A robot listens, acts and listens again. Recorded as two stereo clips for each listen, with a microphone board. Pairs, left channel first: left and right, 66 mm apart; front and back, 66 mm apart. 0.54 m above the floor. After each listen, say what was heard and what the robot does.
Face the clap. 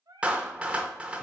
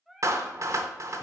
The clap: 160° right. Turn 160° right.
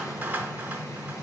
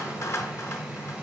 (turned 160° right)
The clap is now 35° right. Turn 35° right.
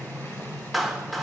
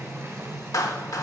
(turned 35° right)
Found it: a clap, straight ahead.